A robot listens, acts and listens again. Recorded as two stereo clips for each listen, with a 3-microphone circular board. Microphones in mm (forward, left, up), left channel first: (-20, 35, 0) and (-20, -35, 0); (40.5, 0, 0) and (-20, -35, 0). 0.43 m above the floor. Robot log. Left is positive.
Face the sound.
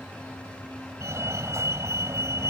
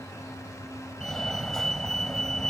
note: The fire alarm: 50° right.
cmd yaw -50
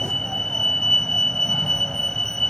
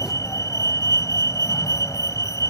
note: The fire alarm is now 10° left.
cmd yaw +10
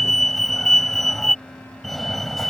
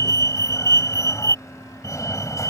end: Facing the fire alarm.